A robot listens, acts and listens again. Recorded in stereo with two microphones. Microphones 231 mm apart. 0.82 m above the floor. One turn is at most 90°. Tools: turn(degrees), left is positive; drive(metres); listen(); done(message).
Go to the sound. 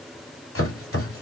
turn(degrees=70)
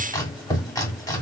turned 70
turn(degrees=15)
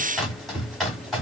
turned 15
drive(metres=1.0)
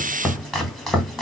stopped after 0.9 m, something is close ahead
done("Arrived at the chopping, straight ahead.")